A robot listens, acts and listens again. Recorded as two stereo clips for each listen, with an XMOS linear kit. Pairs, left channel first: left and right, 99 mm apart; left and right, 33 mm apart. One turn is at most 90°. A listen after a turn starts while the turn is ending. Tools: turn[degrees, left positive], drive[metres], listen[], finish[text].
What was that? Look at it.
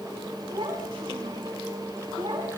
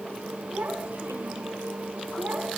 Thought: The child speaking: about 55° right or 125° right.
Action: turn[-55]
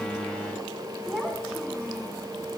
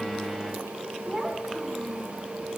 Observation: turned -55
Action: finish[Facing the child speaking, over 4 m away.]